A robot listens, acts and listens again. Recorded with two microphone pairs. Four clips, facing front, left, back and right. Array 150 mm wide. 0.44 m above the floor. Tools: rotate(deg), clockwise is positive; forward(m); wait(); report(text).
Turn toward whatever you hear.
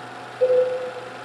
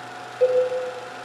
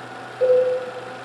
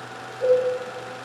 rotate(-130)
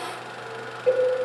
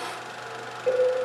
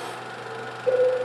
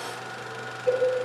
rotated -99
rotate(-30)
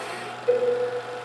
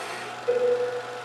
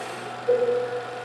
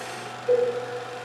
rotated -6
rotate(-25)
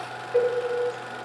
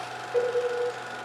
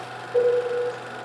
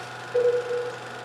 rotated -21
report("Found it: a cowbell, straight ahead, 1 to 2 m away.")